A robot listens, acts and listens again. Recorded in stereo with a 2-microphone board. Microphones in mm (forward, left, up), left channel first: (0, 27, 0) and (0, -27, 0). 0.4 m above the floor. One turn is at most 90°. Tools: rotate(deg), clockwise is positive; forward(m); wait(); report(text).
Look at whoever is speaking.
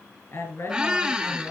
rotate(-55)
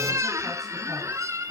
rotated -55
wait()
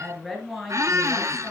report("Found it: a woman speaking, straight ahead.")